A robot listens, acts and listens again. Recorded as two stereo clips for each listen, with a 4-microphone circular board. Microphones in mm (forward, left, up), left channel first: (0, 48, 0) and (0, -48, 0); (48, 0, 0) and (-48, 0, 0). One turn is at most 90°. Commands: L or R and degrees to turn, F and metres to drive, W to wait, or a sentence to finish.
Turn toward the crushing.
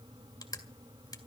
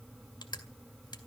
L40
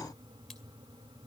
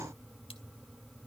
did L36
W
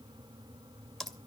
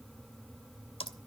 Facing the crushing, 2 to 4 m away.